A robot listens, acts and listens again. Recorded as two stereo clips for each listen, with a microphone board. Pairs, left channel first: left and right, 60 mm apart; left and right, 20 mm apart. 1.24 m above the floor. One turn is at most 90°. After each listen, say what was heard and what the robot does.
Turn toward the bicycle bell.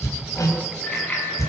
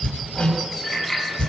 The bicycle bell: about 25° left or 155° left. Turn 25° left.
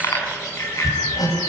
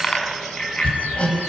So it is at 125° left. Turn 90° left.
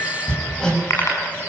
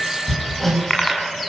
The bicycle bell is now 50° left. Turn 50° left.
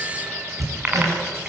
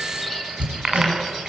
The bicycle bell is now 25° right. Turn 25° right.
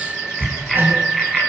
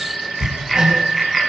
Found it: a bicycle bell, straight ahead, over 4 m away.